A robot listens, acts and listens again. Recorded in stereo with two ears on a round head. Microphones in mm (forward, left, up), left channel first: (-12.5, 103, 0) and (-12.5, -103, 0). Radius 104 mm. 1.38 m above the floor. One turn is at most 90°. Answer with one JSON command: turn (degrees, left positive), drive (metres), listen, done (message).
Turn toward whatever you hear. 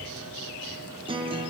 {"turn": -20}
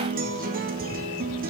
{"turn": -90}
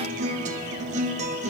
{"turn": -35}
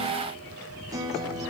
{"turn": -15}
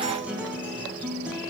{"done": "Facing the guitar, under 1 m away."}